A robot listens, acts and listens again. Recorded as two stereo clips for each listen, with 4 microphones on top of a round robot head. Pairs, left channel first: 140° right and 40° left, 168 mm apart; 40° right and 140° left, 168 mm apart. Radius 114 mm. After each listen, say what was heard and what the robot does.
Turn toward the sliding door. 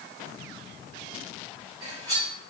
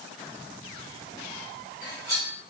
Keep listening.
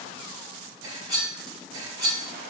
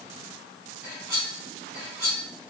Keep listening.
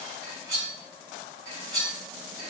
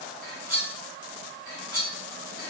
I can't make out a sliding door to turn to.